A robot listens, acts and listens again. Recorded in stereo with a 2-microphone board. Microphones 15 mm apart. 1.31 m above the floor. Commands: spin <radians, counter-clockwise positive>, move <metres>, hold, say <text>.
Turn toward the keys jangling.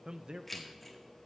spin 0.52
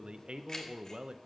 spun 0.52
spin 2.53
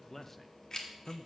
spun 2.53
spin 0.79
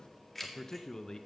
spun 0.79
spin 0.35
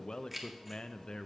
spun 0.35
say Found it: keys jangling, straight ahead, 1 to 2 m away.